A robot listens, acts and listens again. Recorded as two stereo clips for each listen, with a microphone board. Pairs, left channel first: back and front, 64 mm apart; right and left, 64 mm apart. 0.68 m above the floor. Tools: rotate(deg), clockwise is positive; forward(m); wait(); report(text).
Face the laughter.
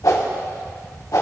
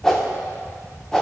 wait()
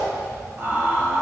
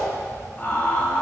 rotate(45)
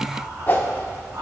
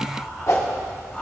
rotate(20)
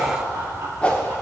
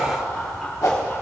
rotate(15)
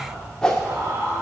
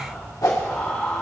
rotate(15)
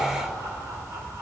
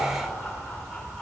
wait()
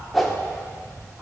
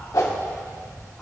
wait()
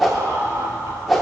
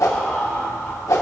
report("Facing the laughter, 2 to 4 m away.")